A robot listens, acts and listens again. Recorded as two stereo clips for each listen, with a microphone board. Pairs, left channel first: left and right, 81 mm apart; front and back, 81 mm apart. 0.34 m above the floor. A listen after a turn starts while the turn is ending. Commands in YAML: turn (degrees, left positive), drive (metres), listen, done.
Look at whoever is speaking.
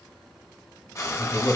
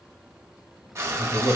turn: 35
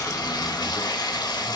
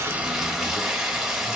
listen: true
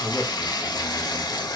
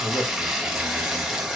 done: "Found it: a man speaking, straight ahead, 1 to 2 m away."